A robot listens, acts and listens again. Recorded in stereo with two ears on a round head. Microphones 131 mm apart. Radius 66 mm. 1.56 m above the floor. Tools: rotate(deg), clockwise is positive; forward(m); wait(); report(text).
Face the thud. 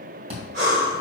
rotate(40)
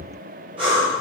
wait()
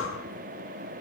report("I heard a thud, but can't make it out now. It was about straight ahead or 100° right.")